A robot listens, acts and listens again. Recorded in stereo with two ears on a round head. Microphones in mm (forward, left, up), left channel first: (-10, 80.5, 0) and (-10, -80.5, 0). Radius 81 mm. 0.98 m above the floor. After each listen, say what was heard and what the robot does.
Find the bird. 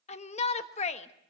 Keep listening.
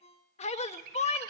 The bird: about 50° right or 130° right. Turn 50° right.
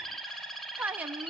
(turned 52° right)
Found it: a bird, straight ahead, 2 to 4 m away.